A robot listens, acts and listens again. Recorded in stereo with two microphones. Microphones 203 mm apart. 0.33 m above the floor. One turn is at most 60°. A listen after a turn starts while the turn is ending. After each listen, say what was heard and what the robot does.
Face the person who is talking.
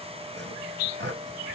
Keep listening.
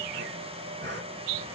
Keep listening.
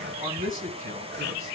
The man speaking: about 45° right or 135° right. Turn 45° right.
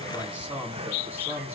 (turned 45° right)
So it is at 10° right. Turn 10° right.
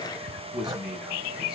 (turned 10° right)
Facing the man speaking.